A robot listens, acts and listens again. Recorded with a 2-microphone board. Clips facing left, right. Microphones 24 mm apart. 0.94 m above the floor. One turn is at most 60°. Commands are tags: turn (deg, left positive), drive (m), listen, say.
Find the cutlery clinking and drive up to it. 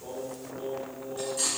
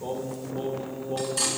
<turn deg="-60"/>
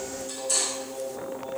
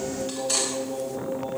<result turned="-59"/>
<turn deg="-45"/>
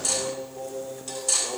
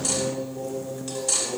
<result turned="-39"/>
<drive m="1.0"/>
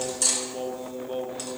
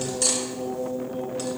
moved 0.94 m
<turn deg="-10"/>
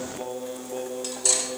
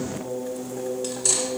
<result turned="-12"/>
<drive m="1.0"/>
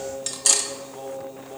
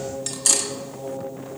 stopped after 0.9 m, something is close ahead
<turn deg="10"/>
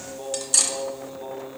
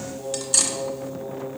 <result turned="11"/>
<say>I am next to the cutlery clinking.</say>